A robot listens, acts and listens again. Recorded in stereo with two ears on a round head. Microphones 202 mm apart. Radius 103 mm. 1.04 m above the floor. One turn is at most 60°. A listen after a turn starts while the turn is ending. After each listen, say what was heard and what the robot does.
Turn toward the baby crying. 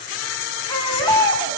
The baby crying: about 20° left or 160° left. Turn 20° left.
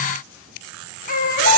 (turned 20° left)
So it is at 140° left. Turn 60° left.
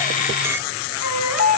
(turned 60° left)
The baby crying is now 100° left. Turn 60° left.
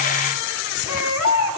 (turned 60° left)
The baby crying is now 65° left. Turn 60° left.
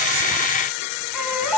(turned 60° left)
Facing the baby crying, over 4 m away.